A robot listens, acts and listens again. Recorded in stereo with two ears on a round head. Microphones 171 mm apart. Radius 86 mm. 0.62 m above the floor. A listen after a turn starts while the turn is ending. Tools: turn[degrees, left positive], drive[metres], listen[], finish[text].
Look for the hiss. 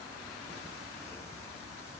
Action: listen[]
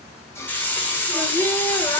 Action: turn[30]
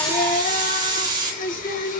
Thought: So it is at 20° right.
Action: turn[-20]
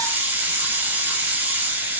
Thought: The hiss is now 10° right.
Action: turn[-10]
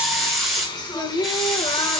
Action: finish[Facing the hiss.]